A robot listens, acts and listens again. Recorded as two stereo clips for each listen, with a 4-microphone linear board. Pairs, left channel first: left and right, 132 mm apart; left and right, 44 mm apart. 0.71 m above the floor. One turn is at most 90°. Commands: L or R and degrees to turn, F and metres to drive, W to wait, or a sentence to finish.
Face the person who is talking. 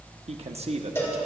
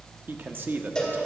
R50
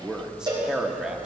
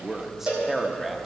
Found it: a man speaking, straight ahead.